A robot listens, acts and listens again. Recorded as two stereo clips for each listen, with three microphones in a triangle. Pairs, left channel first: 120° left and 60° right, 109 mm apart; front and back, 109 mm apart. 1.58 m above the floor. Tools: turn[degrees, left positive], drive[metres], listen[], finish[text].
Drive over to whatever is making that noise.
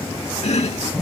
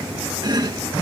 Thought: The chopping: 130° left.
Action: turn[130]
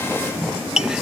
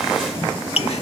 Thought: The chopping is now 25° left.
Action: turn[25]
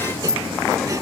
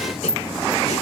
Action: drive[1.0]
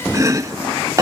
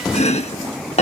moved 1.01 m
Action: drive[1.0]
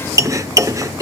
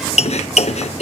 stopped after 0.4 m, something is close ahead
Action: finish[Arrived at the chopping, straight ahead.]